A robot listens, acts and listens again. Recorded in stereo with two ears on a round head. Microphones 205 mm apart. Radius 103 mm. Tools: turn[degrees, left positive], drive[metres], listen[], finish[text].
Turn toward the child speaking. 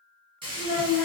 Action: turn[90]
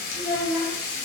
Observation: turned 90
Thought: So it is at 10° right.
Action: turn[-10]
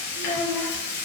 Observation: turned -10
Action: finish[Found it: a child speaking, straight ahead.]